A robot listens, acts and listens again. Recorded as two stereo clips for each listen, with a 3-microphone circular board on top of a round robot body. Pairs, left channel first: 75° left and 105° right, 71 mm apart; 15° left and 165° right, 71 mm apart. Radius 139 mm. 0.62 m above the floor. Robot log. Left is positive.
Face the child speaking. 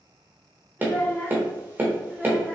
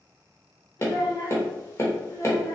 note: The child speaking: 15° right.
cmd yaw -15
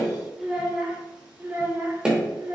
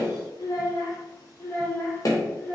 note: The child speaking is now 55° right.
cmd yaw -55
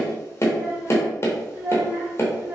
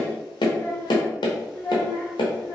note: The child speaking is now 30° right.
cmd yaw -30
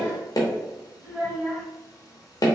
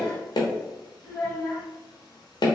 note: The child speaking is now 15° right.
cmd yaw -15
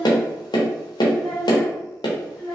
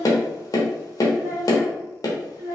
end: Found it: a child speaking, straight ahead, 2 to 4 m away.